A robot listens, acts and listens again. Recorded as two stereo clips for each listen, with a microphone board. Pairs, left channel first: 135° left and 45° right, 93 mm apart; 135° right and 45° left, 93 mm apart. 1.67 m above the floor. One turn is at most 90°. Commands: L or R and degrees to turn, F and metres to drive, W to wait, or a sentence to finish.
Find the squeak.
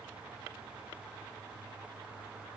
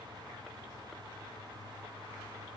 W
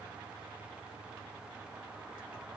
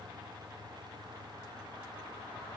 W
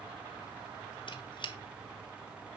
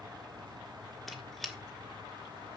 L90
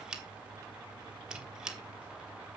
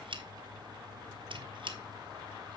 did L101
L35
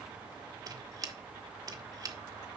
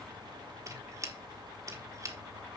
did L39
Found it: a squeak, straight ahead, 1 to 2 m away.